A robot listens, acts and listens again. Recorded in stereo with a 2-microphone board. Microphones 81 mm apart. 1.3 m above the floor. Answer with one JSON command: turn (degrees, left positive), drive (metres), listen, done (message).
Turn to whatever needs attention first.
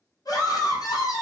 {"turn": 55}
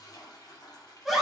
{"done": "Facing the scream, under 1 m away."}